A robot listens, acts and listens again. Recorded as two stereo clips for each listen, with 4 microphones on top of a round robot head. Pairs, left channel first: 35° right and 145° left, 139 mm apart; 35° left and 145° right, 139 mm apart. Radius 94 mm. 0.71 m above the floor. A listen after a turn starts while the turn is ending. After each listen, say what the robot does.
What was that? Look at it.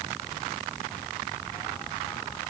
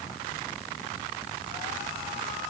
Keep listening.
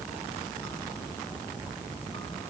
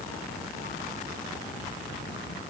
Keep listening.
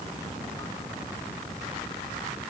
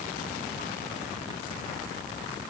I can't make out anything to turn to.